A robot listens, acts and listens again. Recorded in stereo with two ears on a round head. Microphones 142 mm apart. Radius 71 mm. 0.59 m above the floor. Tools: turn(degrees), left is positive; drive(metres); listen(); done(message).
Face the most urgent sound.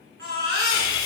turn(degrees=-70)
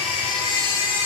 turn(degrees=-40)
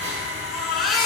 done("Found it: a baby crying, straight ahead, 2 to 4 m away.")